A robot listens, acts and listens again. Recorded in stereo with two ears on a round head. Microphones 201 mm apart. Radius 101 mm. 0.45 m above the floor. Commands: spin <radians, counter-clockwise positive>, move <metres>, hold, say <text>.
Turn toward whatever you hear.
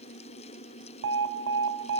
spin -0.87
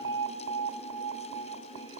spin -1.13
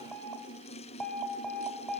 say Facing the alarm, 1 to 2 m away.